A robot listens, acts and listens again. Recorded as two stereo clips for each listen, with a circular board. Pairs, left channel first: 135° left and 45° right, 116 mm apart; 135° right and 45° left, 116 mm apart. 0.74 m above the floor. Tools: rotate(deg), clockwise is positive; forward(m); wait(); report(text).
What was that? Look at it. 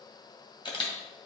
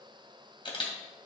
rotate(-180)
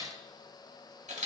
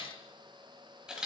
rotate(35)
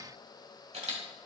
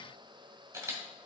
rotate(20)
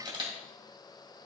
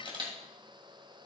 report("Found it: a camera shutter, straight ahead.")